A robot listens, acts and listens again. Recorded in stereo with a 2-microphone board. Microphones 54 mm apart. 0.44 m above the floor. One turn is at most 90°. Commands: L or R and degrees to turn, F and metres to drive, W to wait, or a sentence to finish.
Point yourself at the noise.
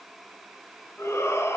L60
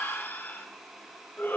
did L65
L45
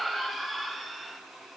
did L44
Found it: a shout, straight ahead, 2 to 4 m away.